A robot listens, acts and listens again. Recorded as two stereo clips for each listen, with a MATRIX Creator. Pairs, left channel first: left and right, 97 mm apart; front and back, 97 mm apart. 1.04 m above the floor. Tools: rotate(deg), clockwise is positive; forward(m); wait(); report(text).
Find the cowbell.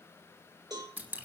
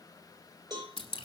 rotate(135)
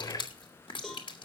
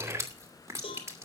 report("Found it: a cowbell, straight ahead.")